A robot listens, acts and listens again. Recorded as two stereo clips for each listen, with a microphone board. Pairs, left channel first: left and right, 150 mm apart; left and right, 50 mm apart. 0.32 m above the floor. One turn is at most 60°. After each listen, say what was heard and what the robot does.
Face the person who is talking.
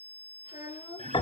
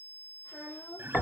Turn 60° left.
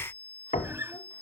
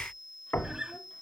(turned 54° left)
Nothing new. It was at 35° left. Turn 35° left.
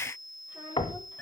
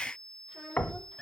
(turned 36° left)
The child speaking is now 15° right. Turn 15° right.
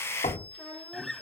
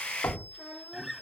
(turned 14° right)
Facing the child speaking.